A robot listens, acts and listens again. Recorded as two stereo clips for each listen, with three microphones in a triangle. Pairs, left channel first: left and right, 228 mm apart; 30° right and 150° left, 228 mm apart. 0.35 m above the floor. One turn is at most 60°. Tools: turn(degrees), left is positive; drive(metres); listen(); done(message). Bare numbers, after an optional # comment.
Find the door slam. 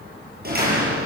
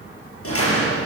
# The door slam: 45° right.
turn(-45)
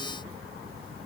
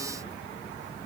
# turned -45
done("Facing where the door slam came from. I can't hear it now.")